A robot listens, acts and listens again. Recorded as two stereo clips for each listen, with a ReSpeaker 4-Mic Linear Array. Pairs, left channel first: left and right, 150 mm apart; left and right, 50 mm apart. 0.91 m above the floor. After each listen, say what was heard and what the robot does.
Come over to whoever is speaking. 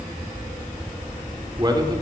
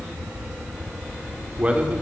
The man speaking: about 25° right or 155° right. Turn 25° right.
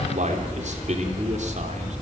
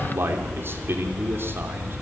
So it is at 125° right. Turn 125° right.
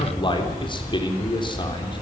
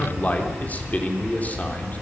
The man speaking is now 35° left. Turn 35° left.
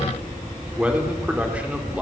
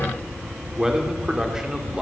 The man speaking is now 10° right. Turn 10° right.
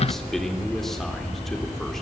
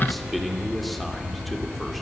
Keep listening.
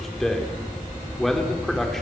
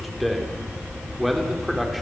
Drive 1.0 m forward.
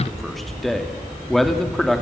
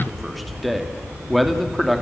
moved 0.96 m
Drive 1.0 m forward.
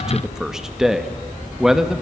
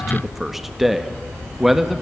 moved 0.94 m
Drive 1.0 m forward.
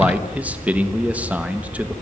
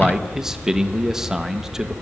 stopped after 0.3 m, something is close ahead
The man speaking is now 10° right. Turn 10° right.
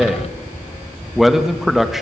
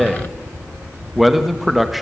Arrived at the man speaking, straight ahead.